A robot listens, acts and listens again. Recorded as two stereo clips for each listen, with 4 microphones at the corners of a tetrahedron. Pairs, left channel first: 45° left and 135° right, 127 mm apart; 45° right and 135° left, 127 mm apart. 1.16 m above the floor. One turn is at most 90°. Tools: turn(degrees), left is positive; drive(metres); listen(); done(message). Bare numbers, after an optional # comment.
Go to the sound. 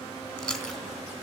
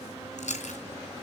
# The chewing: 35° right.
turn(-35)
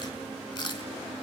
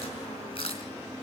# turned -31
drive(1.0)
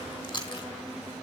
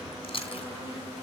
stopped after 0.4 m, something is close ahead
done("Blocked. The chewing is further on, straight ahead.")